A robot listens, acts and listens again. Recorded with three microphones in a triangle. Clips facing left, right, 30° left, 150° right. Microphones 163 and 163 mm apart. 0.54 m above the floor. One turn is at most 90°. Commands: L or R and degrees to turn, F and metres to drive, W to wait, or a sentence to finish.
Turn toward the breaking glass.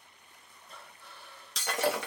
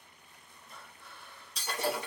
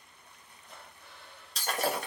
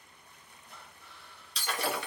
L75
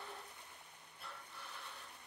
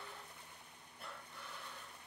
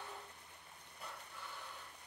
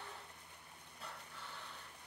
I heard breaking glass from this way, but can't make it out now.